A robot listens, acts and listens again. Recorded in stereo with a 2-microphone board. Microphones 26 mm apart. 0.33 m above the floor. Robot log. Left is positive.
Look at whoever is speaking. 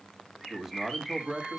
cmd yaw -30
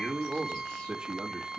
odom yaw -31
note: So it is at 130° right.
cmd yaw -130
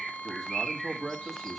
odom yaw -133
end: Found it: a man speaking, straight ahead, 1 to 2 m away.